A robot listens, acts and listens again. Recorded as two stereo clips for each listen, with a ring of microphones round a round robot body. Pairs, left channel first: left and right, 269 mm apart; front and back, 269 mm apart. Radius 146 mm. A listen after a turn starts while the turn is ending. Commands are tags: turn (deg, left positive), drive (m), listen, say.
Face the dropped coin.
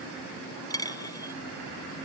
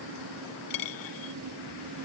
<turn deg="10"/>
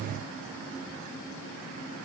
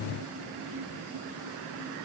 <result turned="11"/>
<say>Facing where the dropped coin came from. I can't hear it now.</say>